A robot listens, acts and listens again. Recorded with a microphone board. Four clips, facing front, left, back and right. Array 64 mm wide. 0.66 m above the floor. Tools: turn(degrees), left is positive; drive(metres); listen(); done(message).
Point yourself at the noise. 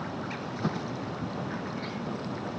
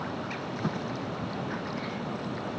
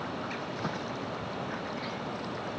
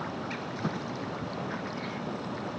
listen()
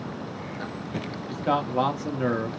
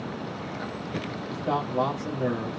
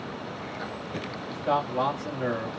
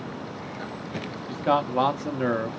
turn(degrees=-75)
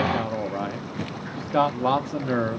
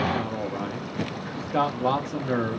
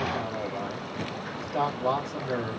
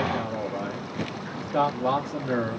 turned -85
turn(degrees=10)
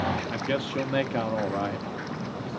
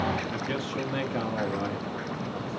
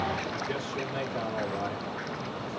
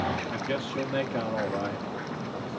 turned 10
done("Found it: a man speaking, straight ahead.")